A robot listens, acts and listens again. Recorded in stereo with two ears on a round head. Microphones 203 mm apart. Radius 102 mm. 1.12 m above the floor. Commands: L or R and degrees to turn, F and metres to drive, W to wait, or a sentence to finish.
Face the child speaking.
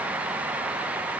W
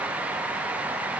W
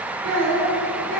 R90
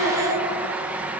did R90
Facing the child speaking, 2 to 4 m away.